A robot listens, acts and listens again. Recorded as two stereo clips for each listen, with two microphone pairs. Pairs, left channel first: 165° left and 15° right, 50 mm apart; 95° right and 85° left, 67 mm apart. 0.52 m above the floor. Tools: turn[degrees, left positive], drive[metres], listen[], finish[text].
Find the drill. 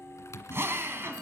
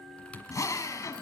Thought: The drill: 55° right.
Action: turn[-55]
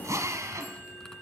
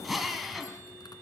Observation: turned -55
Action: finish[Found it: a drill, straight ahead.]